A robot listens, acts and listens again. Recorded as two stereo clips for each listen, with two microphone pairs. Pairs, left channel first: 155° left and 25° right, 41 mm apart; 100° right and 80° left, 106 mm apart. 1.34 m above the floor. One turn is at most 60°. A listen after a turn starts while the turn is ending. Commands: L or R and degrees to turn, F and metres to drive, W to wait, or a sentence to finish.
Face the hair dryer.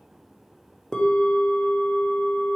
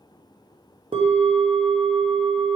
W
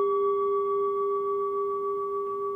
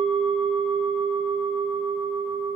W
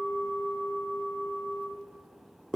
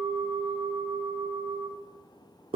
I can't make out a hair dryer to turn to.